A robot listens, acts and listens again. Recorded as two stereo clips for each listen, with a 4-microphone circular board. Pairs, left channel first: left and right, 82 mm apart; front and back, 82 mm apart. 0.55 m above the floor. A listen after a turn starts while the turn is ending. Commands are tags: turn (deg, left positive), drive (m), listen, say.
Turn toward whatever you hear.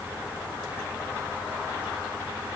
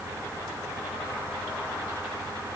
<listen/>
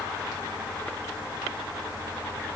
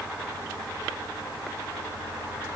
<listen/>
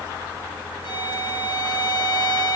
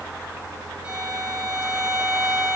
<turn deg="100"/>
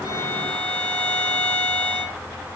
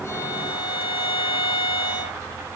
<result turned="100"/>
<turn deg="10"/>
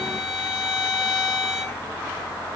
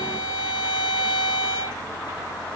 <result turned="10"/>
<say>Facing the violin.</say>